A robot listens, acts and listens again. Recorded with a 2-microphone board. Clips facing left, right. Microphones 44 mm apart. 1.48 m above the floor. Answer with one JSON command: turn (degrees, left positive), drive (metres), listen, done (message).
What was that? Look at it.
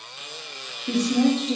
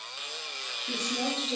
{"turn": 75}
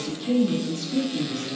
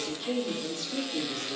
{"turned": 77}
{"turn": -20}
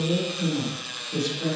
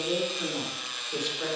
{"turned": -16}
{"turn": -15}
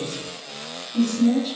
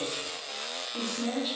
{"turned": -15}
{"turn": -10}
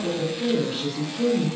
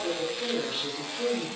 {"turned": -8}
{"done": "Found it: a woman speaking, straight ahead, over 4 m away."}